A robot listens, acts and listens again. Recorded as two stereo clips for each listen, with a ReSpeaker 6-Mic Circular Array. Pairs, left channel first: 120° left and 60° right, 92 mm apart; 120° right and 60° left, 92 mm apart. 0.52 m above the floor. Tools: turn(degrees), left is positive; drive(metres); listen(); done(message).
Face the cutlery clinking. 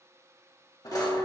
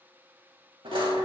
turn(degrees=75)
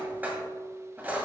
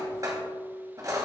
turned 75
turn(degrees=10)
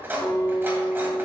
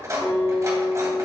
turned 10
done("Found it: cutlery clinking, straight ahead.")